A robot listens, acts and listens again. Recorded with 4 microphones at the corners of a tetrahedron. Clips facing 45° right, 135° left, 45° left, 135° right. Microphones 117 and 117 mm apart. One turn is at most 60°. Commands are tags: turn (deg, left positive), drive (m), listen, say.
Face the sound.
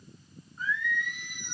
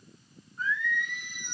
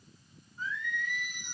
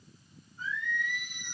<turn deg="40"/>
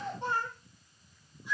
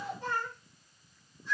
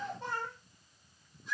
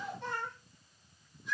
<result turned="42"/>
<turn deg="25"/>
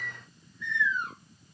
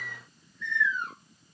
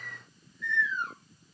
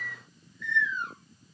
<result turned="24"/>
<turn deg="40"/>
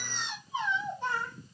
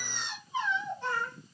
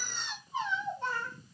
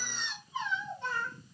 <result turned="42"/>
<turn deg="20"/>
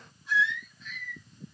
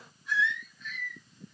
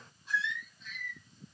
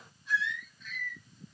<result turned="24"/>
<say>Facing the singing, 1 to 2 m away.</say>